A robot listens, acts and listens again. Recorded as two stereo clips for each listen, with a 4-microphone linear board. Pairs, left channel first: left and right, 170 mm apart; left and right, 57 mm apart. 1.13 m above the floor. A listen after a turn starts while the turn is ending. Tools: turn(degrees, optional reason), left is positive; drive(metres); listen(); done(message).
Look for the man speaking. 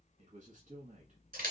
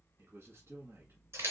turn(degrees=-50, reason="The man speaking: about 50° right or 130° right.")
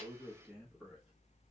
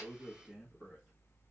done("Found it: a man speaking, straight ahead.")